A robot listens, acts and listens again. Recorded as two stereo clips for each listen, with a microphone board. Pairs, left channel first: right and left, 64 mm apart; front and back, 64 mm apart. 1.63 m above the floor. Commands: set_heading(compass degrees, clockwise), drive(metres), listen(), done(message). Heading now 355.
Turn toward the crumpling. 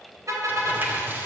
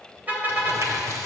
set_heading(210)
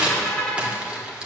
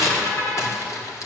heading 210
set_heading(190)
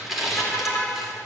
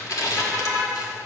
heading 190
done("Found it: crumpling, straight ahead, 2 to 4 m away.")